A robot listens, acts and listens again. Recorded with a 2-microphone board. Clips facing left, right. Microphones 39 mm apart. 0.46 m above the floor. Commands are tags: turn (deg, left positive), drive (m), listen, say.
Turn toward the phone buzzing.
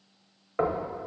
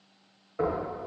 <listen/>
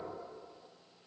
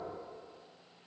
<listen/>
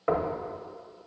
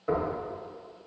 <say>I can't make out a phone buzzing to turn to.</say>